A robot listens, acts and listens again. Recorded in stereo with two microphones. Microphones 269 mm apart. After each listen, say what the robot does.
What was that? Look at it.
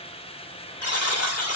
Turn 65° left.
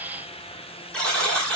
Found it: a buzzer, straight ahead.